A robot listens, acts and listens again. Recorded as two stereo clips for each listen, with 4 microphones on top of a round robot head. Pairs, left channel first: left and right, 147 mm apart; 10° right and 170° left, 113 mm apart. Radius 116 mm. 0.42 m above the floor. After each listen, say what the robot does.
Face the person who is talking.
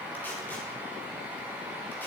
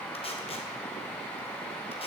Keep listening.
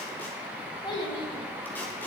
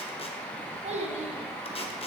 Turn 145° left.
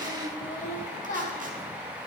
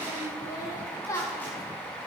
Turn 50° left.
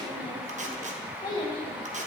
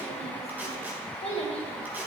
Turn 20° left.
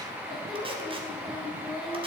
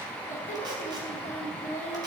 Found it: a child speaking, straight ahead.